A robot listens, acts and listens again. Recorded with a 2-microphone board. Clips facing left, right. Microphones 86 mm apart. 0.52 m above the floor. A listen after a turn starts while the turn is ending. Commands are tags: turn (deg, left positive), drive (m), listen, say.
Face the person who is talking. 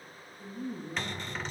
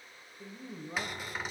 <turn deg="-70"/>
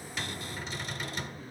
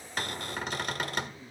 <turn deg="-40"/>
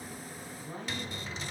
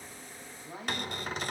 <turn deg="-10"/>
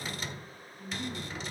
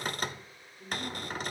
<turn deg="-10"/>
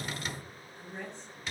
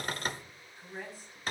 <say>Facing the woman speaking.</say>